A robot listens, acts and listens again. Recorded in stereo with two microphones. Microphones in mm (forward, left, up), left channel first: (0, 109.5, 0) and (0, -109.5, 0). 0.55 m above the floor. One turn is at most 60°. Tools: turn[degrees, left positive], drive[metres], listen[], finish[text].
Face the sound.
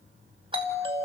Thought: The doorbell: about 25° right or 155° right.
Action: turn[-25]
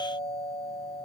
Action: finish[Found it: a doorbell, straight ahead.]